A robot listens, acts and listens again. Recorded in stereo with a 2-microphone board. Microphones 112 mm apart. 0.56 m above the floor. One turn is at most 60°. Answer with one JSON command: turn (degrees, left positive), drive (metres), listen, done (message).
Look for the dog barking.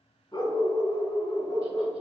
{"turn": 35}
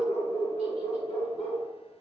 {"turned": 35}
{"turn": 60}
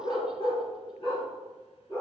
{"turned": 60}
{"turn": 55}
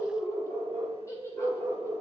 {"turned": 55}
{"turn": 20}
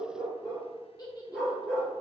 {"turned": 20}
{"turn": 10}
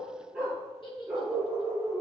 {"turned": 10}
{"done": "Found it: a dog barking, straight ahead, 2 to 4 m away."}